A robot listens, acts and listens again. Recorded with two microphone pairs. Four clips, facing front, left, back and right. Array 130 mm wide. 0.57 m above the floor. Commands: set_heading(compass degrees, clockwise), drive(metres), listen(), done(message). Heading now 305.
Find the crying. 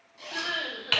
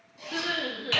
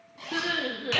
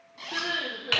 set_heading(115)
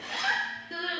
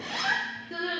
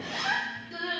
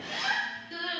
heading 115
set_heading(85)
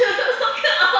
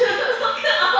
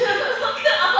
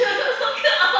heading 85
done("Facing the crying, 2 to 4 m away.")